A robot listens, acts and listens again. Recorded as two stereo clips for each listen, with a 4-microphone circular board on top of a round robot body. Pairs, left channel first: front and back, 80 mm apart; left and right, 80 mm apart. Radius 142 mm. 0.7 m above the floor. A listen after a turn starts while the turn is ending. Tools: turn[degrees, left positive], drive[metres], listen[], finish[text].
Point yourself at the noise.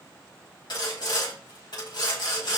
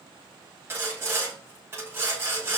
Thought: The sawing: 30° right.
Action: turn[-30]
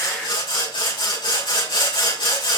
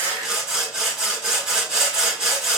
Thought: The sawing is now 10° right.
Action: turn[-10]
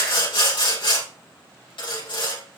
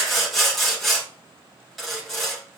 Action: finish[Found it: sawing, straight ahead, over 4 m away.]